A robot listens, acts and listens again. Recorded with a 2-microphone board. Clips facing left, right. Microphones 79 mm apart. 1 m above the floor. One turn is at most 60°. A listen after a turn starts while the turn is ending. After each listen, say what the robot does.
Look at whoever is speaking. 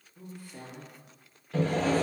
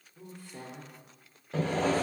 Turn 30° left.
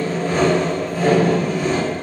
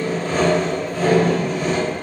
Keep listening.
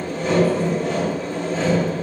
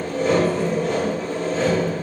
Keep listening.
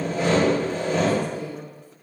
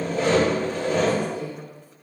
Turn 60° left.
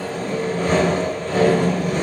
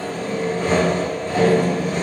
Turn 60° left.
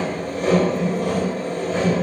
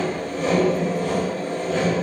Turn 15° left.
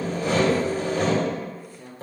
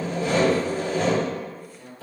Facing the woman speaking, 1 to 2 m away.